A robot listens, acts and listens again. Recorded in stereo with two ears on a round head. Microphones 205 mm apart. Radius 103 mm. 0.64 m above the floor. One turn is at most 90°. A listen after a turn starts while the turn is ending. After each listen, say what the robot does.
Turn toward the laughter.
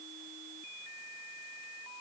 Keep listening.
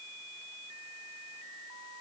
Keep listening.
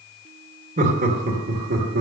Turn 45° right.
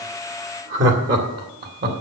Turn 45° right.
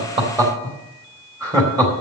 Turn 15° right.
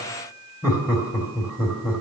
Turn 10° right.
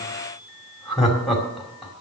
Found it: laughter, straight ahead, 2 to 4 m away.